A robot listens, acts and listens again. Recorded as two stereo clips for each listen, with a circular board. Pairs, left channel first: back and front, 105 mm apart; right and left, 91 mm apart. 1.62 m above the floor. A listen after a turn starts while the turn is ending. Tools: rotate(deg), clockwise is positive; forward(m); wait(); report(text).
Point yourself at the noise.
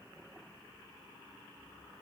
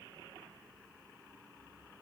wait()
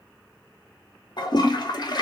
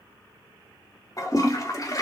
rotate(135)
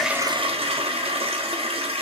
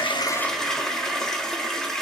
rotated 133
report("Found it: a toilet flushing, straight ahead, under 1 m away.")